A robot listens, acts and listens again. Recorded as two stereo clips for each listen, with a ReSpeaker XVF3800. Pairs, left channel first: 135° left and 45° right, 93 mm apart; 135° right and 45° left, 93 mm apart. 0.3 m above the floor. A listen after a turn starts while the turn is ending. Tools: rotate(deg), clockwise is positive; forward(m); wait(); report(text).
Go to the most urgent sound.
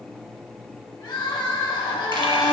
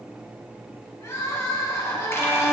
rotate(-170)
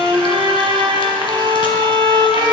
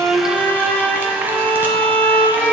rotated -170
wait()
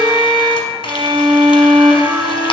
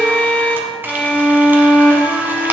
wait()
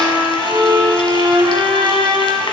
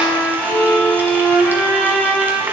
report("I heard crying from this way, but can't make it out now. I did not reach it.")